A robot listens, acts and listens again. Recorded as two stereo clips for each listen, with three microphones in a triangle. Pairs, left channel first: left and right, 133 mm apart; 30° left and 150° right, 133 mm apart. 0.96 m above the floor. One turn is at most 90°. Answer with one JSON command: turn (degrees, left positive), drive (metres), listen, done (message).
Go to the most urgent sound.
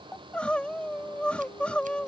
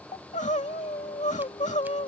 {"turn": 10}
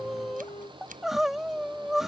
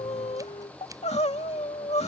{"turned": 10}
{"drive": 1.0}
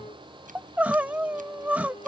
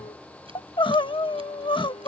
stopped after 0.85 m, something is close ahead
{"turn": -15}
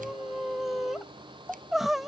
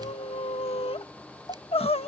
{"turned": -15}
{"done": "I am next to the crying."}